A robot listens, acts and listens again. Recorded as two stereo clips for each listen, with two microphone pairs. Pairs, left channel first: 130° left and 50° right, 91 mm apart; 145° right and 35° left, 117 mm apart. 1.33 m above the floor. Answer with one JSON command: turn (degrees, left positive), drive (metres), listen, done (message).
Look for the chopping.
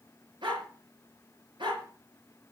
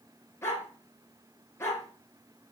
{"listen": true}
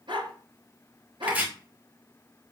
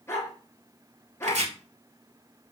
{"turn": 25}
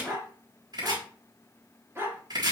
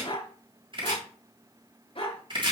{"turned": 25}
{"turn": -10}
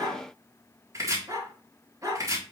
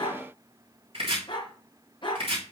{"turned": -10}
{"done": "Found it: chopping, straight ahead, 2 to 4 m away."}